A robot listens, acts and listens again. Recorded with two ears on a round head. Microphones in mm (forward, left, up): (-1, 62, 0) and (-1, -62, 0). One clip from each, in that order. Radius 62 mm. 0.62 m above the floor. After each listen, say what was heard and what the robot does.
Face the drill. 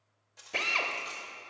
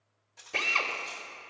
Turn 30° left.
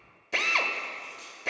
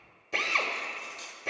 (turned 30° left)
So it is at 150° left. Turn 150° left.
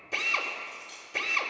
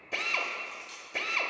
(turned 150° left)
Facing the drill.